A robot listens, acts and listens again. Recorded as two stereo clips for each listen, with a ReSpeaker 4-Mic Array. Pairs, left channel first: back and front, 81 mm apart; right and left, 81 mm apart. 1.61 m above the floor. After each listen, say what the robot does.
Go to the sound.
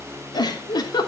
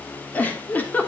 Turn 160° right.
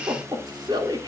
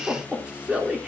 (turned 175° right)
Turn 15° left.
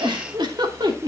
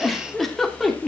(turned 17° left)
Drive 1.0 m forward.
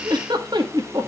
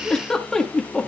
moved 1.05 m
Turn 10° right.
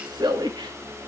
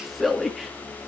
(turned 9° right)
Drive 1.0 m forward.
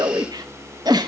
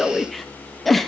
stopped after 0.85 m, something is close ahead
I am next to the giggle.